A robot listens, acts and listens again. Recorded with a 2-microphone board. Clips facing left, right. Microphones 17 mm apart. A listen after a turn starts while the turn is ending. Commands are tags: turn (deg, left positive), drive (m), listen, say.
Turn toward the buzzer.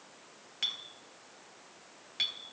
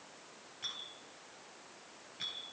<listen/>
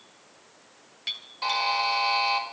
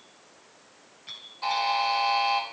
<turn deg="45"/>
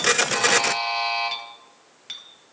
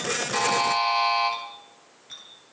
<say>Found it: a buzzer, straight ahead, over 4 m away.</say>